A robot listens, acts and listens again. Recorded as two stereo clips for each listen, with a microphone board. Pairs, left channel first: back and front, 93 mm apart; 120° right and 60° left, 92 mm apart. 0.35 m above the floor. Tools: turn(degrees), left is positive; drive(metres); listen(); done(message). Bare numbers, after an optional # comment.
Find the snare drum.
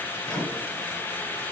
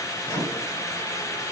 listen()
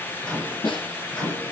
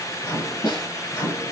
# The snare drum: 155° right.
turn(-155)
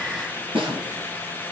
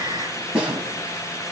# The snare drum is now 15° right.
turn(-15)
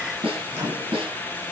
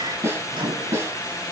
done("Facing the snare drum, 1 to 2 m away.")